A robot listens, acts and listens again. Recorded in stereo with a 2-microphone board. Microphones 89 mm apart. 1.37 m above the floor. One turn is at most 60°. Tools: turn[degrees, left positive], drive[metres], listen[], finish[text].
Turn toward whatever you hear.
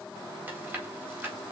Thought: The chewing: about 20° right or 160° right.
Action: turn[-20]
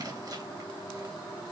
Action: listen[]
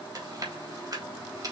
Thought: So it is at 135° right.
Action: turn[-60]
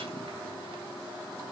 Thought: Nothing new. It was at 75° right.
Action: turn[-60]
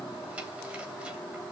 Thought: Nothing new. It was at 15° right.
Action: turn[-15]
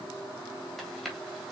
Action: finish[Facing the chewing, 2 to 4 m away.]